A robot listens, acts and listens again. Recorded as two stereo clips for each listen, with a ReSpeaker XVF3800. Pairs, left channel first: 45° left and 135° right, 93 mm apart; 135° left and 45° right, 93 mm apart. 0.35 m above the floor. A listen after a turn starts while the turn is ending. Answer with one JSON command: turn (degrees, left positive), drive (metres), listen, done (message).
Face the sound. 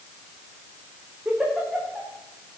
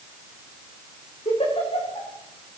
{"turn": 140}
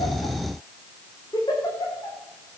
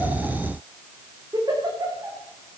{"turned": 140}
{"done": "Found it: a giggle, straight ahead."}